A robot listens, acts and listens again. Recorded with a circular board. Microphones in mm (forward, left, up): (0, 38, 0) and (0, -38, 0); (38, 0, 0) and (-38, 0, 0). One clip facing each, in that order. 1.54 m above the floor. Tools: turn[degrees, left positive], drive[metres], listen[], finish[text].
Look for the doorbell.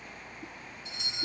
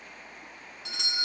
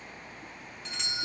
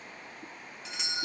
Thought: The doorbell: 95° right.
Action: turn[-95]
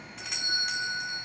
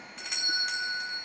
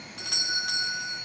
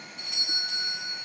Action: finish[Found it: a doorbell, straight ahead.]